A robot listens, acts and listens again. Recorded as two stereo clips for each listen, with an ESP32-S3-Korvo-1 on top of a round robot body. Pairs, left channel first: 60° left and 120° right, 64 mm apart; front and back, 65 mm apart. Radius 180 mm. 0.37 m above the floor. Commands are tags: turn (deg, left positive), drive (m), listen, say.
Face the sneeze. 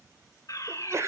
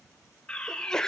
<turn deg="-80"/>
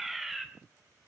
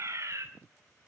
<say>I heard a sneeze from this way, but can't make it out now.</say>